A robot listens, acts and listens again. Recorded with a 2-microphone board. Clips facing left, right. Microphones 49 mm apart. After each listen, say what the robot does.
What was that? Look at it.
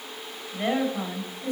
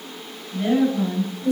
Turn 45° left.
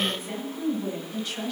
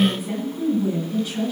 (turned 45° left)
Facing the woman speaking.